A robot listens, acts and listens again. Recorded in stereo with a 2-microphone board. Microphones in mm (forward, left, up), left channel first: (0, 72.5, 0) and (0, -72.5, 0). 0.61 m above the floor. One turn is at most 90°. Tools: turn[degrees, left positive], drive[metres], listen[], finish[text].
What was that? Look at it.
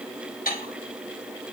Action: turn[90]
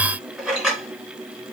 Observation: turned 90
Action: finish[Found it: dishes clattering, straight ahead.]